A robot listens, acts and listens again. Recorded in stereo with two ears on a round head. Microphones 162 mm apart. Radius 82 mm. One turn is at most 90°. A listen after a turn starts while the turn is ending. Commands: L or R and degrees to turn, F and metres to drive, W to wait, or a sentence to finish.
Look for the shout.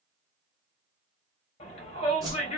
L35
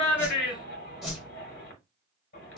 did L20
L90
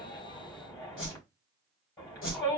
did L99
L20
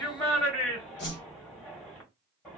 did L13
Facing the shout.